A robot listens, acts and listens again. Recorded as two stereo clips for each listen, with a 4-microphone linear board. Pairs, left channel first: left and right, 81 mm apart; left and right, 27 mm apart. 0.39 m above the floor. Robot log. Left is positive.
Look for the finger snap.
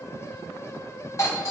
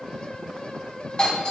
cmd idle
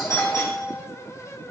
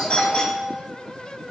cmd idle
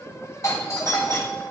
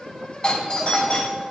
end: I can't make out a finger snap, only a doorbell.